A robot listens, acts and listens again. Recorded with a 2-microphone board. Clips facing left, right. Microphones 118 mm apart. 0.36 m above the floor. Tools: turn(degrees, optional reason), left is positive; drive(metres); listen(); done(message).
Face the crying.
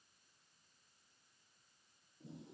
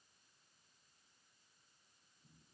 listen()
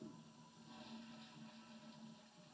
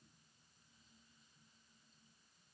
listen()
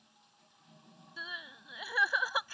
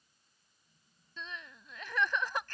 turn(degrees=30)
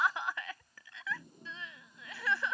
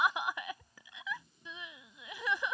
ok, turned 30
turn(degrees=-20, reason="So it is at 20° right.")
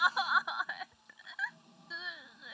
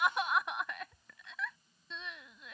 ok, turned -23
done("Facing the crying.")